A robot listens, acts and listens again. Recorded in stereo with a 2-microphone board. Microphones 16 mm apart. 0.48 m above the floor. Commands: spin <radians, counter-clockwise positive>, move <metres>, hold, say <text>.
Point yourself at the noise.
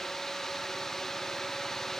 hold
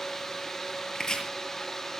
spin 0.79
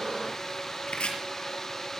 spin 1.48
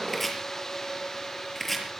say Found it: chopping, straight ahead, over 4 m away.